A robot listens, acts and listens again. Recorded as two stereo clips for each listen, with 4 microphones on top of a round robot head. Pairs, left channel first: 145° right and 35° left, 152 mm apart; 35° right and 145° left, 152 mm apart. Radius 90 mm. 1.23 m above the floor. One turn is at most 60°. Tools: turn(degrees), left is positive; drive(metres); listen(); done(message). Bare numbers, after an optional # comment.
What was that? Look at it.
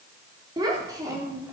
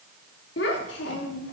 # The child speaking: 35° right.
turn(-35)
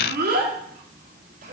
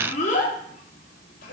done("Facing the child speaking.")